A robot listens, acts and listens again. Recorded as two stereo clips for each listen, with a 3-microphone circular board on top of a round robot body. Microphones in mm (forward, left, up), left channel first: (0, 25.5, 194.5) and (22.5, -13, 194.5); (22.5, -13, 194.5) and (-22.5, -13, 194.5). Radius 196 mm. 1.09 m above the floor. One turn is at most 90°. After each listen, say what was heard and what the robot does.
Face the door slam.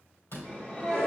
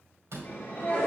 The door slam: 150° left. Turn 90° left.
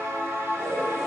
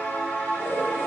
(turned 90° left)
Nothing new. It was at 60° left. Turn 60° left.
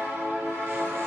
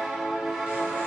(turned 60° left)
I heard a door slam from this way, but can't make it out now.